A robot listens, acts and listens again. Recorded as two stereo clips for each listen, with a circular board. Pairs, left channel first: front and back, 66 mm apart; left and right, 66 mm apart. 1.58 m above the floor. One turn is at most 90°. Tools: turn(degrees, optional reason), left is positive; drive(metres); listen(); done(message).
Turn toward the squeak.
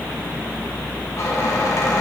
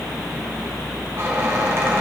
turn(degrees=-40, reason="The squeak: 40° right.")
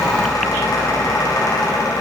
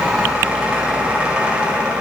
turn(degrees=-20, reason="The squeak is now 20° right.")
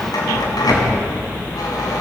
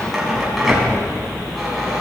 done("Facing the squeak, over 4 m away.")